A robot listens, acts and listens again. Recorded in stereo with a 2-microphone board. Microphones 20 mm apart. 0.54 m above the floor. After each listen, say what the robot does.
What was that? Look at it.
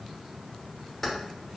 Turn 20° left.
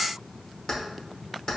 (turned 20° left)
Turn 140° left.
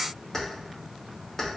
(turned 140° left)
Turn 20° left.
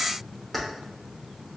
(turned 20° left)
Found it: keys jangling, straight ahead, under 1 m away.